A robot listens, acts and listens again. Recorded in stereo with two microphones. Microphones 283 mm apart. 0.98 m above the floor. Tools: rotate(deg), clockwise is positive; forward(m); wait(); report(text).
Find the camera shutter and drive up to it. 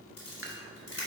rotate(-65)
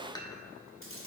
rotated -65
rotate(-50)
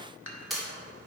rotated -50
forward(1.0)
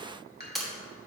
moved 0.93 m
forward(1.0)
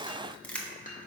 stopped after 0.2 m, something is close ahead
report("I am next to the camera shutter.")